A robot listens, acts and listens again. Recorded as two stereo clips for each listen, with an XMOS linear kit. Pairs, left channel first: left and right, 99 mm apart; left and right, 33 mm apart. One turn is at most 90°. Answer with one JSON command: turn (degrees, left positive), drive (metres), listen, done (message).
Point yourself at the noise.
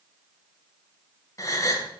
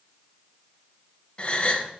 {"turn": 35}
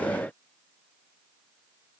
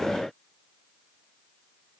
{"listen": true}
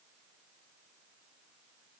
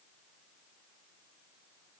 {"done": "I heard a gasp, but can't make it out now. It was about straight ahead or 110° left."}